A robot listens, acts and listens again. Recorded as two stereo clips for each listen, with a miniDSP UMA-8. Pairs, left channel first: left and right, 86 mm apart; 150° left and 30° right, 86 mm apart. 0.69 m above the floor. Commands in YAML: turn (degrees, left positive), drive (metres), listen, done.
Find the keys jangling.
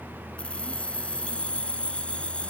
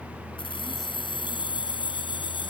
turn: 165
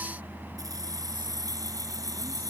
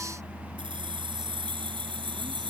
turn: -45
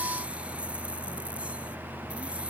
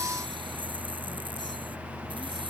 listen: true
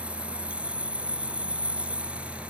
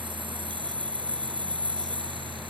turn: -15
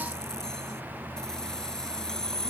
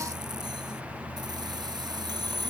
done: "Found it: keys jangling, straight ahead."